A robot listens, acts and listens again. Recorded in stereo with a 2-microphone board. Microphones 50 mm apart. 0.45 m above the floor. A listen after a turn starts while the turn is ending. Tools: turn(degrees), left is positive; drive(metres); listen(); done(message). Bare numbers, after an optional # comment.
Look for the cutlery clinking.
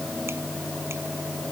listen()
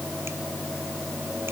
listen()
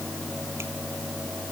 done("I can't make out cutlery clinking.")